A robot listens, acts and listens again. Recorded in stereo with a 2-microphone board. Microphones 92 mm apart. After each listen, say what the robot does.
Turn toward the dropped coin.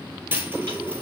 Turn 25° right.
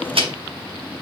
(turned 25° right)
Keep listening.
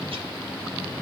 I heard a dropped coin, but can't make it out now. It was about straight ahead or 130° right.